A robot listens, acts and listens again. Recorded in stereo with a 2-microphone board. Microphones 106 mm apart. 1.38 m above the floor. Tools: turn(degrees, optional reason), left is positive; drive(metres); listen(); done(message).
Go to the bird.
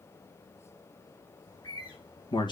turn(degrees=50, reason="The bird: about 50° left or 130° left.")
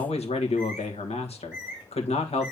drive(metres=1.0)
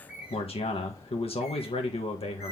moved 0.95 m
turn(degrees=-10, reason="The bird is now 10° right.")
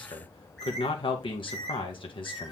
drive(metres=1.0)
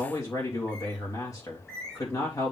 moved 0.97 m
drive(metres=1.0)
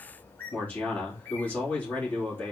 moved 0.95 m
turn(degrees=20, reason="The bird is now 20° left.")
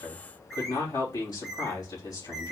drive(metres=1.0)
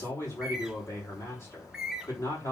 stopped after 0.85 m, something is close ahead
done("I am next to the bird.")